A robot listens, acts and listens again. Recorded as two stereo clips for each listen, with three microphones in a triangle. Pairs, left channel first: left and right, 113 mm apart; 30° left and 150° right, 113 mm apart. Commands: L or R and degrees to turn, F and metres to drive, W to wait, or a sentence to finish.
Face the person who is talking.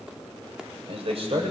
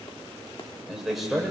R60
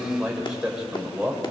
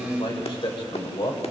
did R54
Found it: a man speaking, straight ahead, 2 to 4 m away.